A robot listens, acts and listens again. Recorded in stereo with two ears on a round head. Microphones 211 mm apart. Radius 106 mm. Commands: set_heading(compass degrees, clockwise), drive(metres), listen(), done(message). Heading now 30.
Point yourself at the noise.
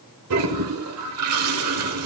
set_heading(95)
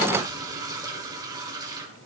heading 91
set_heading(106)
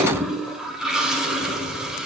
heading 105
done("Facing the toilet flushing, 1 to 2 m away.")